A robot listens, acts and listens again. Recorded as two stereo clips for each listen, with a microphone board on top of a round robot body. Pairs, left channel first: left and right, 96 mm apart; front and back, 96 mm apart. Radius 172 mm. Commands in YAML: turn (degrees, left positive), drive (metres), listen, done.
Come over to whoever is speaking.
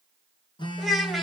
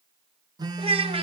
turn: 180
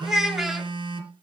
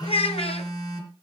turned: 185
drive: 1.0
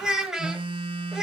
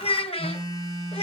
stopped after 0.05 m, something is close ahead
done: "Something is in my way. I am facing the child speaking but have not reached it."